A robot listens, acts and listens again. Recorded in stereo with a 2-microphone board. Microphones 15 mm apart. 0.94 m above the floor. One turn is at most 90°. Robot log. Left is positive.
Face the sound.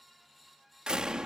note: The door slam: about 60° right or 120° right.
cmd yaw -60
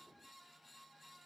cmd idle
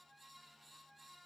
end: I heard a door slam, but can't make it out now. It was about straight ahead or 60° right.